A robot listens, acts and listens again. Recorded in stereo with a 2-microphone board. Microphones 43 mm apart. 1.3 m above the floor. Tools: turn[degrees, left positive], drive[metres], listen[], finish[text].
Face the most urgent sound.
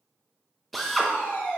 Thought: The fire alarm: about 55° left or 125° left.
Action: turn[55]
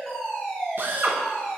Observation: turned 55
Action: finish[Facing the fire alarm.]